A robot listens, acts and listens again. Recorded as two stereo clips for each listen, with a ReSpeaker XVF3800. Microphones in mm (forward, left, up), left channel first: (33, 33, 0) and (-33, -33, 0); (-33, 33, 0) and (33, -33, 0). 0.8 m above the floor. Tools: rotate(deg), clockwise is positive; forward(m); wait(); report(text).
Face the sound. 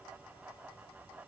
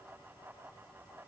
wait()
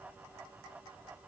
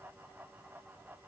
wait()
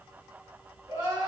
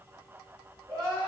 rotate(95)
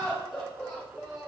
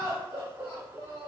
rotate(45)
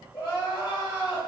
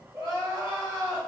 report("Found it: crying, straight ahead.")